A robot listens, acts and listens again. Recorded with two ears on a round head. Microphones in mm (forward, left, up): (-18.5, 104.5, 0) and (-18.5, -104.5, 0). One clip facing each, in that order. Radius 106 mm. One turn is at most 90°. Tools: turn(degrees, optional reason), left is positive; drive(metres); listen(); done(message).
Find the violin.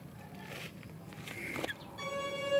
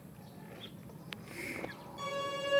turn(degrees=30)
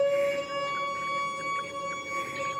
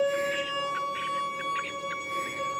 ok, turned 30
turn(degrees=-30, reason="So it is at 30° right.")
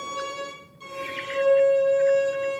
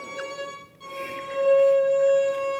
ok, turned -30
turn(degrees=15, reason="The violin is now 15° left.")
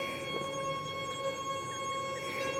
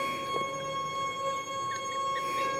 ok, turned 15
done("Facing the violin, over 4 m away.")